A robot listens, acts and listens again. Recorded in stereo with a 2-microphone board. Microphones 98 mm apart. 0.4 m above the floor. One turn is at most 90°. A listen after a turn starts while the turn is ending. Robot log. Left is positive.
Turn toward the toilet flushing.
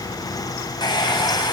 cmd idle
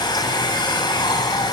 cmd idle
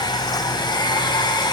end: I can't make out a toilet flushing, only a hair dryer.